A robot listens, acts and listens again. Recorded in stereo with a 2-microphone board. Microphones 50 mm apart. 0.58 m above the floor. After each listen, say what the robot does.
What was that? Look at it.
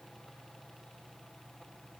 Keep listening.
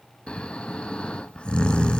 Turn 20° left.
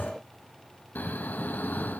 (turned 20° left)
Turn 140° left.
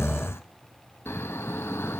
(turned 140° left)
Turn 55° left.
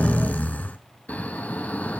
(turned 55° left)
Turn 30° left.
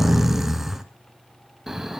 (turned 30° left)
Found it: snoring, straight ahead, 1 to 2 m away.